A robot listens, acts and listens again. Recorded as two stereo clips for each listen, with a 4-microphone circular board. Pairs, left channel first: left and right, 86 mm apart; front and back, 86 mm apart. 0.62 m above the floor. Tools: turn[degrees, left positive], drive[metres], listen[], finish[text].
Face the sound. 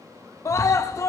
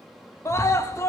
Thought: The scream: 45° left.
Action: turn[45]
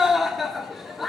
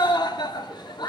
Action: finish[Found it: a scream, straight ahead, 1 to 2 m away.]